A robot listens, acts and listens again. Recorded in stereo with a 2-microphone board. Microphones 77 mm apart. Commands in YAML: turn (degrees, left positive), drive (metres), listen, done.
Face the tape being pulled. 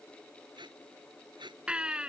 turn: -90
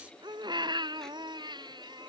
listen: true
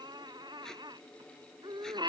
listen: true
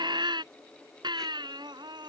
done: "I heard tape being pulled from this way, but can't make it out now."